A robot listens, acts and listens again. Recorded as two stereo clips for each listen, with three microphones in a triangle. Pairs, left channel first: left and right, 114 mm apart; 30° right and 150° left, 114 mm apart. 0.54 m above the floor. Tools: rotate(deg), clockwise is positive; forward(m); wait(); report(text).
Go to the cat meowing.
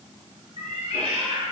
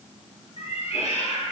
rotate(45)
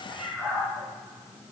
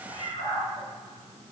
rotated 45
rotate(10)
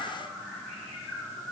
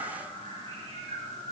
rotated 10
forward(1.0)
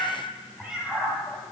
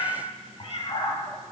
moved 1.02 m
forward(1.0)
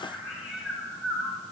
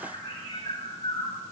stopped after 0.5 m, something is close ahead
report("I am next to the cat meowing.")